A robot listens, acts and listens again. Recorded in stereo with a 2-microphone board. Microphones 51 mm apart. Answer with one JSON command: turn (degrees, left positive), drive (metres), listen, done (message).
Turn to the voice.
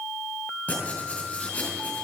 {"listen": true}
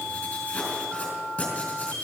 {"listen": true}
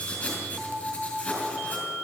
{"done": "I can't make out anyone speaking to turn to."}